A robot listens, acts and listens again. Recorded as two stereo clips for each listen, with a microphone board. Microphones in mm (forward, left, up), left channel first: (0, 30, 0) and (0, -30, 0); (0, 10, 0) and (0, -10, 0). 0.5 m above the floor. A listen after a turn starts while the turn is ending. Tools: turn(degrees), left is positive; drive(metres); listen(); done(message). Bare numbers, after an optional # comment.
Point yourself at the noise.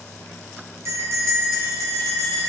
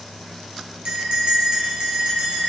# The bell: about 50° right or 130° right.
turn(-50)
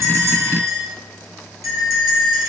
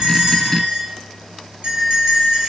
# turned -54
# So it is at 75° right.
turn(-75)
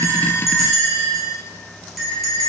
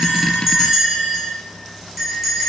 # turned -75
done("Facing the bell.")